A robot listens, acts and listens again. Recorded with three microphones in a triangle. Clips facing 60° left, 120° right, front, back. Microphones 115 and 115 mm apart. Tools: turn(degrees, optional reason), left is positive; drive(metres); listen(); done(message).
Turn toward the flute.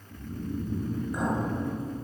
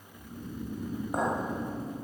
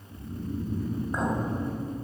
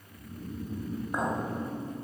listen()
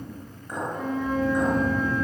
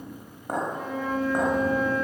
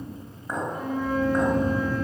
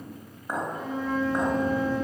turn(degrees=-40, reason="The flute: 40° right.")
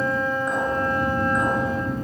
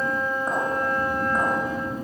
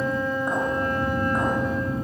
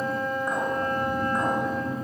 done("Facing the flute.")